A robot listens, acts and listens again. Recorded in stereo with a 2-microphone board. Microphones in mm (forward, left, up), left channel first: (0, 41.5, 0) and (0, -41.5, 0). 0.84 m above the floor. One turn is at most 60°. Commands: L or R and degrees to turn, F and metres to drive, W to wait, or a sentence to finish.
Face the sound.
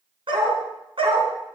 R60
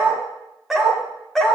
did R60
L10
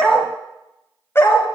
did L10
L30
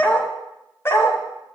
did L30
L30
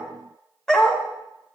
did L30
Found it: a dog barking, straight ahead, 1 to 2 m away.